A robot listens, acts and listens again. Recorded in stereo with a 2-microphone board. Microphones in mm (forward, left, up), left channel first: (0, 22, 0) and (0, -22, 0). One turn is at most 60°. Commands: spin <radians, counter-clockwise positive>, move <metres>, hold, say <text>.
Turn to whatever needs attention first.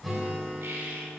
hold
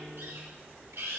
hold
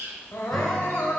spin 1.05
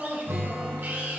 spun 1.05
spin 0.35
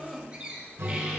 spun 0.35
say Facing the crying.